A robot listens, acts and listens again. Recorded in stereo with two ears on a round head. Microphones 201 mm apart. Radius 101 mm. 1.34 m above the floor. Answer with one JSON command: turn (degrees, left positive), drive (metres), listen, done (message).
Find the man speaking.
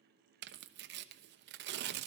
{"listen": true}
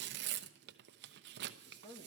{"turn": 20}
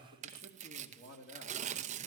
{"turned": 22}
{"turn": 135}
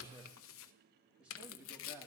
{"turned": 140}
{"done": "Facing the man speaking, 2 to 4 m away."}